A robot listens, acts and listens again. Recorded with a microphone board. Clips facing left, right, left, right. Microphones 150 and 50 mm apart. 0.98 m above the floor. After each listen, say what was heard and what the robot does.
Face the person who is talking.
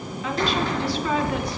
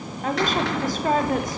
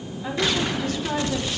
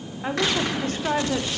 The woman speaking: about 45° right or 135° right. Turn 45° right.
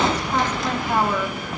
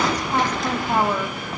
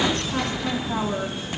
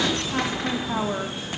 So it is at 15° right. Turn 15° right.
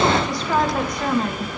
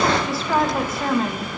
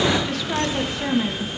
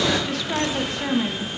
Facing the woman speaking.